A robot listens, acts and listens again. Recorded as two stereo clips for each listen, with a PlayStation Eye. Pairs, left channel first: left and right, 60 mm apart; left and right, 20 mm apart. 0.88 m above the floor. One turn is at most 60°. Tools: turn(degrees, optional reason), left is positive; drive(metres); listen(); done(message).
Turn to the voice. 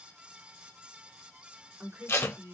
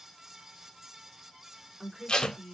turn(degrees=-40, reason="The woman speaking: about 40° right or 140° right.")
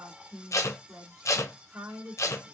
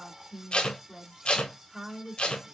turn(degrees=-60, reason="So it is at 95° right.")
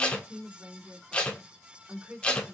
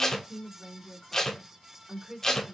turn(degrees=-30, reason="The woman speaking is now 30° right.")
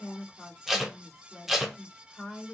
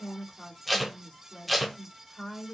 done("Facing the woman speaking, 2 to 4 m away.")